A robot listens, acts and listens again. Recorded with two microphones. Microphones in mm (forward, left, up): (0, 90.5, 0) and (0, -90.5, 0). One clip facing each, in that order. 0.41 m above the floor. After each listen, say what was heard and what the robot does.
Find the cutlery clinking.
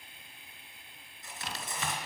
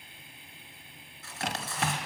The cutlery clinking: about 20° left or 160° left. Turn 20° left.
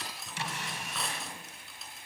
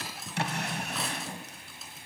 Found it: cutlery clinking, straight ahead.